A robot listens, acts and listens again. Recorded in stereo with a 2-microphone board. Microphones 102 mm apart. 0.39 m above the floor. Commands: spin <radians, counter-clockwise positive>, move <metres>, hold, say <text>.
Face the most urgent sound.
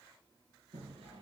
hold
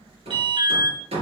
spin -0.96
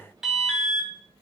say Facing the alarm.